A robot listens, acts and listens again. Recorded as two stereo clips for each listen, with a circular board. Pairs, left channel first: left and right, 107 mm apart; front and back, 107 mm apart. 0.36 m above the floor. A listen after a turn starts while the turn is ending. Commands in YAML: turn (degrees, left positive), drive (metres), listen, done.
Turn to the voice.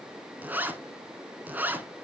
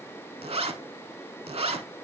listen: true
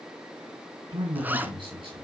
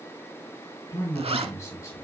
turn: -60
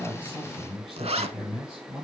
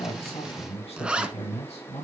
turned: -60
done: "Found it: a man speaking, straight ahead."